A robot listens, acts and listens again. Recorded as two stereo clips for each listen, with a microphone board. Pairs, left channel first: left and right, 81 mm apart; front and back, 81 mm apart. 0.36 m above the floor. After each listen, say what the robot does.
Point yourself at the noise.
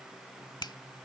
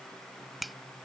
Turn 90° left.
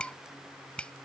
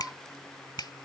Turn 15° left.
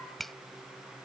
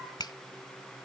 Facing the finger snap.